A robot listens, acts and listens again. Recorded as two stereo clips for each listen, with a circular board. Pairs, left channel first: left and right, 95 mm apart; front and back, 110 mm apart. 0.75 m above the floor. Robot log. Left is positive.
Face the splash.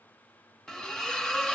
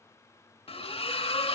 end: Facing the splash.